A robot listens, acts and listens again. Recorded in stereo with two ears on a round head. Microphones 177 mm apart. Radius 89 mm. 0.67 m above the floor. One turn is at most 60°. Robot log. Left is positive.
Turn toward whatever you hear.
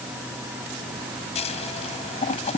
note: The scissors: about 35° left or 145° left.
cmd yaw +35
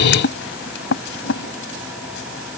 note: So it is at 110° left.
cmd yaw +60
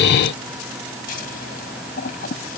note: The scissors is now 45° left.
cmd yaw +45
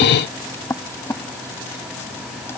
note: The scissors is now 10° left.
cmd yaw +10
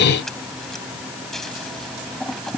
end: Facing the scissors.